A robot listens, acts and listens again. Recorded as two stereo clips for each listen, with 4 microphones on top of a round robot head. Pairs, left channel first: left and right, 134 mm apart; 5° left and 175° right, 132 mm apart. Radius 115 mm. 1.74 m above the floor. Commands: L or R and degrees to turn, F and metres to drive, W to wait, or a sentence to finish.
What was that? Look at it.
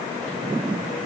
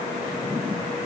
W
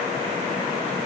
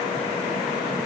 W
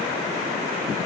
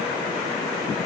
I can't make out anything.